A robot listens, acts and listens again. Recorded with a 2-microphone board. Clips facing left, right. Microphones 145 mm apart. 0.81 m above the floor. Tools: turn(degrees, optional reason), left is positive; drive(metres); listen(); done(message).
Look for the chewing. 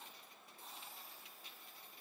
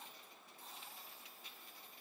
listen()
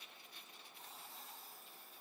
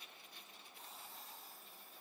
listen()
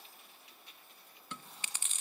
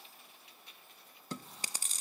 turn(degrees=-35, reason="The chewing: about 35° right or 145° right.")
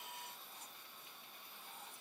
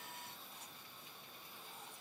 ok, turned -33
listen()
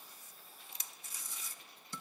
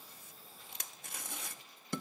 turn(degrees=-110, reason="So it is at 110° right.")
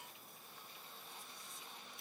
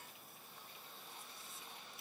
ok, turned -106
done("Facing the chewing, under 1 m away.")